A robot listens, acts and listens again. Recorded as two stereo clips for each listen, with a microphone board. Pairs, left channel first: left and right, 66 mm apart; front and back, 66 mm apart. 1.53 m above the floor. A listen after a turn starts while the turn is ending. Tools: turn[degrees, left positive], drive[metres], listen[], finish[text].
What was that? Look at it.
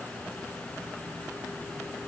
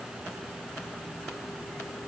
Action: listen[]
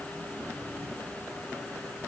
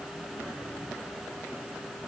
Action: listen[]
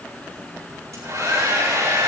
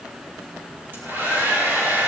Thought: The hair dryer: 120° right.
Action: turn[-120]
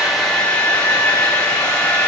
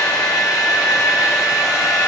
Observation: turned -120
Thought: The hair dryer is now 15° left.
Action: turn[15]
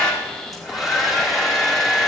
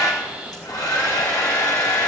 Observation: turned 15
Action: finish[Found it: a hair dryer, straight ahead, over 4 m away.]